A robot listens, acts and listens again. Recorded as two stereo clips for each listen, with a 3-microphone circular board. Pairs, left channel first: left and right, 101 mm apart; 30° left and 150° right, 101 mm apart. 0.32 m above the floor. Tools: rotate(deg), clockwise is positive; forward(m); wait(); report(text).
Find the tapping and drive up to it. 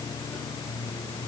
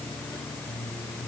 wait()
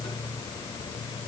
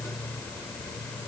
wait()
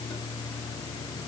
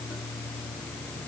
report("I can't make out tapping.")